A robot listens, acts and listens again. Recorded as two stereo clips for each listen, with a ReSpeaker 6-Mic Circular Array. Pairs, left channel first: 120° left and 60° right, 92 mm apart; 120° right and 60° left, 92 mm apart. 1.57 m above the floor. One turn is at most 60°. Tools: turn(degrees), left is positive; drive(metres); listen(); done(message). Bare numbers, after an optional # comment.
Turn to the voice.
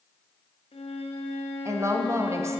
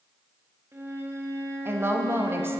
done("Found it: a woman speaking, straight ahead.")